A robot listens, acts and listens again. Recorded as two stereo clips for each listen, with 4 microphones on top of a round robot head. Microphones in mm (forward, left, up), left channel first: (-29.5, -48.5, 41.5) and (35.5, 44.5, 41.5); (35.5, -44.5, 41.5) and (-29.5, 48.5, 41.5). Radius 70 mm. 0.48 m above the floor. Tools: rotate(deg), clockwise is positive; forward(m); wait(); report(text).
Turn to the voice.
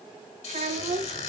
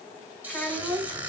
rotate(-20)
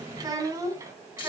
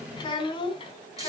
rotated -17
rotate(15)
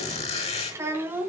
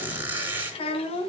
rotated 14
rotate(20)
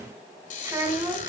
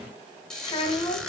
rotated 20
rotate(15)
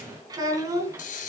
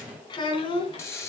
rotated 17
rotate(10)
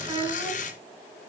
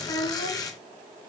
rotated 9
report("Found it: a child speaking, straight ahead.")